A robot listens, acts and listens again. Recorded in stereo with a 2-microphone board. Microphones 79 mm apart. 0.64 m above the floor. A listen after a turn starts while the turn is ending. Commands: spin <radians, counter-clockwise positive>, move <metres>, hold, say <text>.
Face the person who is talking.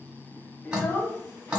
spin 0.52
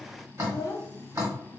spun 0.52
spin 2.09
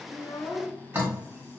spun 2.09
spin 0.35
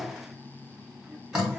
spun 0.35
hold
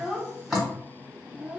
say Found it: a child speaking, straight ahead, under 1 m away.